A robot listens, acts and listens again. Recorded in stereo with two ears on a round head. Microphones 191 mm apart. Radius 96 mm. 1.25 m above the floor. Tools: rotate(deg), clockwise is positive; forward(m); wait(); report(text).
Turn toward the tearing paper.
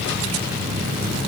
wait()
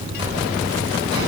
wait()
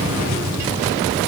report("I can't make out tearing paper to turn to.")